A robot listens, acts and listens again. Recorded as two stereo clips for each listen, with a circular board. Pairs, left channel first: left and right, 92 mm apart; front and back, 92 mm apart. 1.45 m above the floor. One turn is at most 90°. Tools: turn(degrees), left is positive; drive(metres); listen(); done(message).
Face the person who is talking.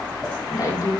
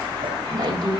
turn(degrees=90)
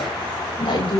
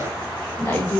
turn(degrees=75)
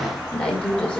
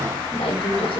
turn(degrees=15)
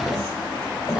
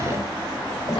done("Facing the woman speaking.")